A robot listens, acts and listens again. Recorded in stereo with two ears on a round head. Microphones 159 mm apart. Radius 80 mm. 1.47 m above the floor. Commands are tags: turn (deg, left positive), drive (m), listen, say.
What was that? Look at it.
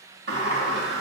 <turn deg="-70"/>
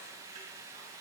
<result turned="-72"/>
<listen/>
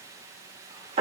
<turn deg="-35"/>
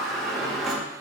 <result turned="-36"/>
<say>Found it: a sliding door, straight ahead, 1 to 2 m away.</say>